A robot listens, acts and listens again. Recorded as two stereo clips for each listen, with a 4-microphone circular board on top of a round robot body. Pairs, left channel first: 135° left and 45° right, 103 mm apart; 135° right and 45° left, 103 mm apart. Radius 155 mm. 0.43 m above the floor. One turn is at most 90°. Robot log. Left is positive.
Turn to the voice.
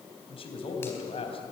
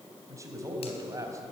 note: The man speaking: 105° left.
cmd yaw +90
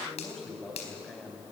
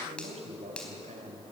note: The man speaking is now 45° left.
cmd yaw +45
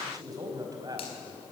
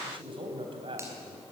note: The man speaking is now 10° left.
cmd yaw +10
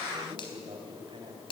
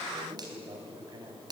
end: Facing the man speaking, 2 to 4 m away.